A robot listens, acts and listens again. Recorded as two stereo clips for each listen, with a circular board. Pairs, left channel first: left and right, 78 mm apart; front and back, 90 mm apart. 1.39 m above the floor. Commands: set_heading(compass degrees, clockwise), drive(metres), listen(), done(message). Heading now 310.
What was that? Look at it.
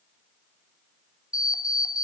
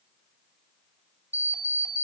set_heading(195)
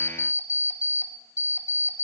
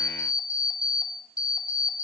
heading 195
set_heading(155)
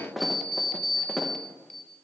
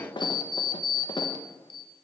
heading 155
done("Facing the alarm clock, under 1 m away.")